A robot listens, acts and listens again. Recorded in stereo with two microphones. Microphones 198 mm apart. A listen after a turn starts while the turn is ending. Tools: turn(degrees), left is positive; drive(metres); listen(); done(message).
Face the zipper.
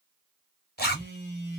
turn(degrees=55)
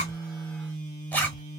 turn(degrees=10)
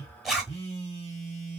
done("Found it: a zipper, straight ahead, 1 to 2 m away.")